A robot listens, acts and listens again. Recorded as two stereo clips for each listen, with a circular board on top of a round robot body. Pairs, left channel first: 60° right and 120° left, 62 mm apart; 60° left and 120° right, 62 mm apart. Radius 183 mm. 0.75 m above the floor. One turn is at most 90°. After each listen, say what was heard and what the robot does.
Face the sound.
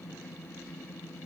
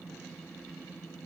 Keep listening.
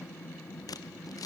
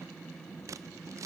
The scissors: 85° right. Turn 85° right.
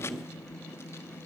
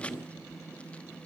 The scissors is now 10° right. Turn 10° right.
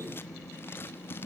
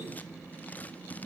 Facing the scissors, under 1 m away.